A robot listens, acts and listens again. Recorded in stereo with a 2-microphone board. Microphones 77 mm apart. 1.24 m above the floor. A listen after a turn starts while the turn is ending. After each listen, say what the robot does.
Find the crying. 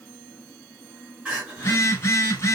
Turn 15° right.
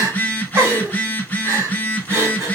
Turn 145° right.
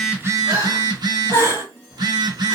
Turn 40° right.
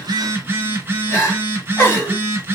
Turn 25° left.
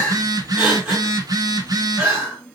Turn 10° right.
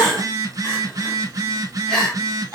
Facing the crying, 2 to 4 m away.